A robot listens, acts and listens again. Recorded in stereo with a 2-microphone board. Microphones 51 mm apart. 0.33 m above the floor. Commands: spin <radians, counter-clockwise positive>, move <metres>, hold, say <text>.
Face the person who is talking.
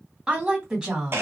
spin -0.52
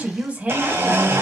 spin -2.62
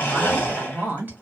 spin -0.61
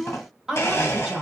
spin -0.35
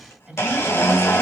spin -0.26
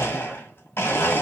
hold
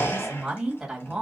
spin -0.17
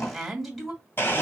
say Facing the woman speaking.